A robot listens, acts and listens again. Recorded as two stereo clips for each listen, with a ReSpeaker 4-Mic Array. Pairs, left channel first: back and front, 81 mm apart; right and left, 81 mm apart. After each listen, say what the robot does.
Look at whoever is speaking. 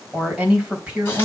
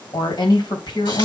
Turn 75° right.
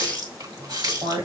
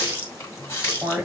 Turn 15° left.
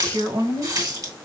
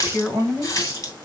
Facing the woman speaking, 2 to 4 m away.